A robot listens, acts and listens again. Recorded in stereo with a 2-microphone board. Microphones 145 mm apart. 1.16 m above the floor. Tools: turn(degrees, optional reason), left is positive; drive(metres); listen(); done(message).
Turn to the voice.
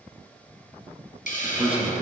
turn(degrees=-30)
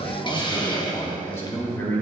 turn(degrees=20, reason="So it is at 20° left.")
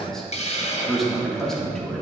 done("Found it: a man speaking, straight ahead.")